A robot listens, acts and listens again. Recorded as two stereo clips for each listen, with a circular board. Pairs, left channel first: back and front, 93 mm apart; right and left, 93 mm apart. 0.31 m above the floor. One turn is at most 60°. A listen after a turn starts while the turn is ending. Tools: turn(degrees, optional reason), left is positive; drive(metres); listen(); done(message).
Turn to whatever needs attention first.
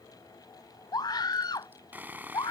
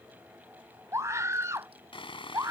turn(degrees=60, reason="The scream: 145° left.")
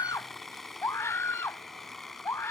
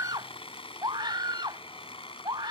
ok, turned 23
turn(degrees=60, reason="The scream is now 120° left.")
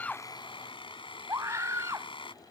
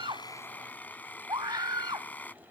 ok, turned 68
turn(degrees=55, reason="The scream is now 55° left.")
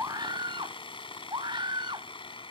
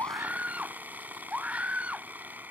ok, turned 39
turn(degrees=15, reason="The scream is now 15° left.")
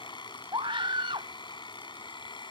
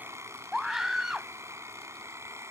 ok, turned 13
done("Facing the scream.")